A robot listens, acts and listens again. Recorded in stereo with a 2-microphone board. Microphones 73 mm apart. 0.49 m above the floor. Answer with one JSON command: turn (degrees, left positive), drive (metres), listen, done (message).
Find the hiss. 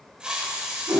{"turn": -30}
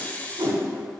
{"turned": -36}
{"turn": 20}
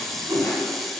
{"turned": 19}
{"done": "Facing the hiss, under 1 m away."}